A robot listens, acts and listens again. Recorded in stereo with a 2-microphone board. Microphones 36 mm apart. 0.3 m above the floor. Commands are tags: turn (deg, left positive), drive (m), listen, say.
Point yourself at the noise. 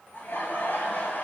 <turn deg="65"/>
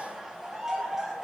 <turn deg="-10"/>
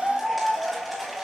<say>Facing the laughter, over 4 m away.</say>